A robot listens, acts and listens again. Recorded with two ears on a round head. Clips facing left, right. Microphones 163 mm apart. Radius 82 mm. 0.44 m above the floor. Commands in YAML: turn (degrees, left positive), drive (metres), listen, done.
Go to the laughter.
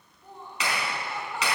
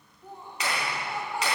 turn: -30
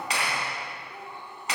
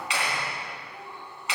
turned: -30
turn: 15
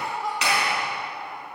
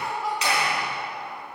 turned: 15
drive: 1.0
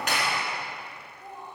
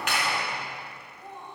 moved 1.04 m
drive: 1.0
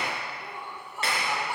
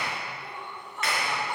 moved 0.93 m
turn: 10
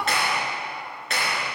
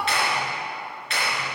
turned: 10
drive: 1.0
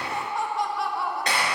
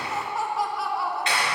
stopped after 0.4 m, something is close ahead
done: "I am next to the laughter."